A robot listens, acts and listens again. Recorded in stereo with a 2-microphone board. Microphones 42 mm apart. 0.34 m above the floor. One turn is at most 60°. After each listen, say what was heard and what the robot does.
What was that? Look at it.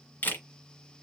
The camera shutter: about 45° left or 135° left. Turn 45° left.
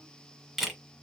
Found it: a camera shutter, straight ahead, 1 to 2 m away.